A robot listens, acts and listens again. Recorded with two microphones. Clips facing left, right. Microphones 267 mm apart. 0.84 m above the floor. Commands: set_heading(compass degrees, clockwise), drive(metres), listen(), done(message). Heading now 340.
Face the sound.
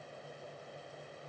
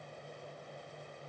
listen()
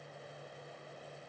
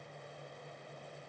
listen()
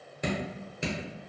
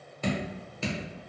set_heading(325)
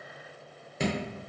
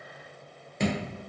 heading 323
done("Facing the dripping.")